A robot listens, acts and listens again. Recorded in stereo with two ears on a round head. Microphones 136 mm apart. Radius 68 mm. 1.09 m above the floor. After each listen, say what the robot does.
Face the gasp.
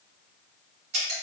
Keep listening.
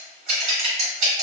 Keep listening.
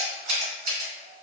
I can't make out a gasp, only scissors.